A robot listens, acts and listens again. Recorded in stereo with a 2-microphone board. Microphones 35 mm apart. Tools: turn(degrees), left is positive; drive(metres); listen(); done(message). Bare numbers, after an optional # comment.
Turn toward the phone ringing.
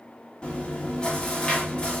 listen()
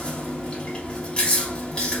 listen()
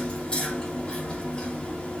done("I can't make out a phone ringing to turn to.")